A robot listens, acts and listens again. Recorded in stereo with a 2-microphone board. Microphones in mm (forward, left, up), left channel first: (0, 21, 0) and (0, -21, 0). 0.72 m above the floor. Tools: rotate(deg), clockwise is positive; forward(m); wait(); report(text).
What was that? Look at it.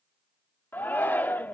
rotate(-50)
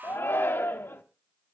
rotate(-75)
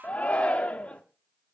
rotate(-35)
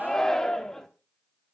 rotate(-15)
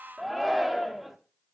report("Found it: a shout, straight ahead, 1 to 2 m away.")